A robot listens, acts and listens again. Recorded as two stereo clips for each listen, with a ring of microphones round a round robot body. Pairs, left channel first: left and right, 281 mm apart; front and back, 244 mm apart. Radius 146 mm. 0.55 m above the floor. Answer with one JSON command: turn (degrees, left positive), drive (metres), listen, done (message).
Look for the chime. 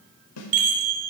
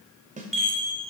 {"turn": -90}
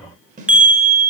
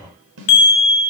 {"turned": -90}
{"done": "Found it: a chime, straight ahead."}